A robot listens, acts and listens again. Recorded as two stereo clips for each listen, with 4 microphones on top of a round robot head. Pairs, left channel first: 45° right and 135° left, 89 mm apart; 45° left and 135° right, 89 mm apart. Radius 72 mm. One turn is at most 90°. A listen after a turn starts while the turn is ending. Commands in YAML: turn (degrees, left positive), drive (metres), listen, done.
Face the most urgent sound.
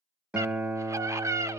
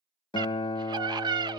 turn: -90
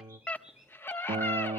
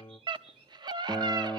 turn: -90
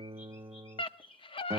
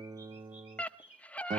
turn: -30
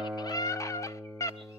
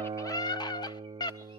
turn: 10
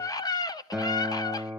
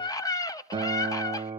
done: "Facing the scream, 1 to 2 m away."